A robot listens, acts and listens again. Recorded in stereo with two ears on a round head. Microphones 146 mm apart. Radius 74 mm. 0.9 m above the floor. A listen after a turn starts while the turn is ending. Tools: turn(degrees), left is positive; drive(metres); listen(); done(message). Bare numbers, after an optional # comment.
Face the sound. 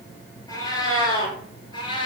# The cat meowing: about 35° left or 145° left.
turn(35)
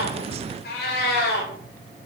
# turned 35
# So it is at 105° left.
turn(105)
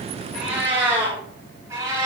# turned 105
# The cat meowing is now 20° right.
turn(-20)
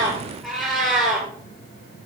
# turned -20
done("Facing the cat meowing, over 4 m away.")